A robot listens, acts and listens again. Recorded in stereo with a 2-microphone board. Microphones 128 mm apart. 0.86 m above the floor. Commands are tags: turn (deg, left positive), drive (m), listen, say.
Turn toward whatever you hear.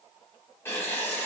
<turn deg="20"/>
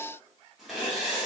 <say>Facing the writing.</say>